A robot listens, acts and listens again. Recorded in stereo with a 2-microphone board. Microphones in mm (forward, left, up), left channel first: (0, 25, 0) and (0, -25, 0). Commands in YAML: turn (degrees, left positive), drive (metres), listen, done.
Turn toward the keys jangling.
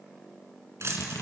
turn: -55
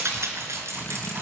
turn: -60
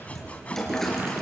done: "Found it: keys jangling, straight ahead."